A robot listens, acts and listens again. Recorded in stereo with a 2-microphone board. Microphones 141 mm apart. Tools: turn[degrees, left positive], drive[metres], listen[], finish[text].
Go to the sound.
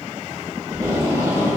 Thought: The tape being pulled: about 30° right or 150° right.
Action: turn[-30]
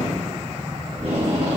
Thought: So it is at 120° right.
Action: turn[-120]
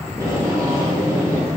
Thought: The tape being pulled is now 30° right.
Action: turn[-30]
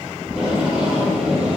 Action: drive[1.0]
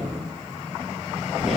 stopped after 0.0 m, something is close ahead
Action: finish[Something is in my way. I am facing the tape being pulled but have not reached it.]